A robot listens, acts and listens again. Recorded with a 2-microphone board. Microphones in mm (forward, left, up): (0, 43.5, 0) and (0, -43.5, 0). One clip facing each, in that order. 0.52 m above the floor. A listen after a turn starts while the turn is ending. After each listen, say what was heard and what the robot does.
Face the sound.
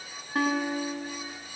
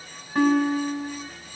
Turn 30° left.
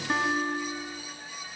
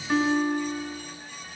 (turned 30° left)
So it is at 145° left. Turn 145° left.
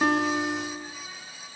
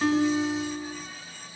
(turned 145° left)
The guitar is now 35° left. Turn 35° left.
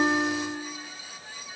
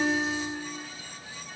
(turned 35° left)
The guitar is now 20° right. Turn 20° right.
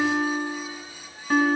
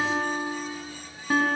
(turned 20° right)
Facing the guitar, 2 to 4 m away.